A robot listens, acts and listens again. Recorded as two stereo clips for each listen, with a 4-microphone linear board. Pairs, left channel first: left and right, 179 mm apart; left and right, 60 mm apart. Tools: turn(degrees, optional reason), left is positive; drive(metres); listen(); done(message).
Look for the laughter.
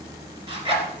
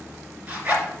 listen()
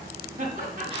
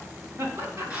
turn(degrees=-50, reason="The laughter: about 50° right or 130° right.")
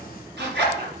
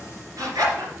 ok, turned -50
listen()
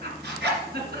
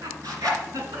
turn(degrees=-70, reason="So it is at 70° right.")
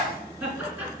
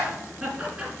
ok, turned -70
turn(degrees=-10, reason="The laughter is now 10° right.")
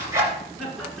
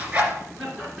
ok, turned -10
done("Found it: laughter, straight ahead.")